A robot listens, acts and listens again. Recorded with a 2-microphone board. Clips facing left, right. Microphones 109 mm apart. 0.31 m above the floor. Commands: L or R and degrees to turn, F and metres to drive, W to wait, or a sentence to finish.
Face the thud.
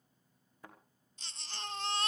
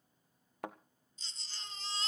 R75
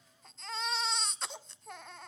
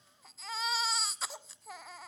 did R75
W
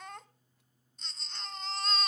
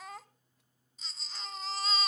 I heard a thud, but can't make it out now. It was about straight ahead or 30° right.